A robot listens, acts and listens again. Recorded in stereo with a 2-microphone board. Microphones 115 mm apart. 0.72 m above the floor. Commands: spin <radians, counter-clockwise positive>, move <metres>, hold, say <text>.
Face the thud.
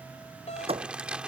spin -0.96
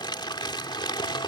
hold
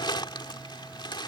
say I heard a thud, but can't make it out now. It was about straight ahead or 70° right.